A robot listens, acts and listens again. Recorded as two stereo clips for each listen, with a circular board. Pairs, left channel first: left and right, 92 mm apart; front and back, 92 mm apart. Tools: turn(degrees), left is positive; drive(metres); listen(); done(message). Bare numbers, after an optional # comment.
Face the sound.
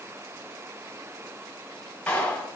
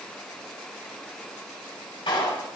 # The clap: 15° left.
turn(15)
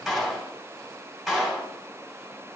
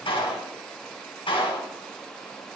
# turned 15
done("Facing the clap.")